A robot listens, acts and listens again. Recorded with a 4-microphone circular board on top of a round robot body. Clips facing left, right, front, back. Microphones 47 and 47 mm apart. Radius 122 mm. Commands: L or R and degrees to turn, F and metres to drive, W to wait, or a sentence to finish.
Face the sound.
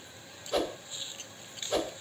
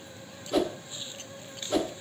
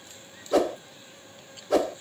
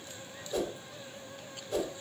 Found it: a whoosh, straight ahead.